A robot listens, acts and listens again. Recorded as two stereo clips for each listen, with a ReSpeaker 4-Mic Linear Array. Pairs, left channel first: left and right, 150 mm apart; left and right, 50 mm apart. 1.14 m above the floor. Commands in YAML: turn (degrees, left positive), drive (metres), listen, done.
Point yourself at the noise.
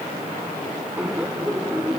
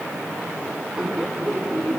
turn: -30
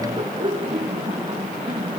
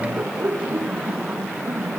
turn: -140
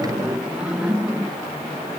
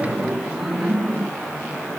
done: "Found it: laughter, straight ahead."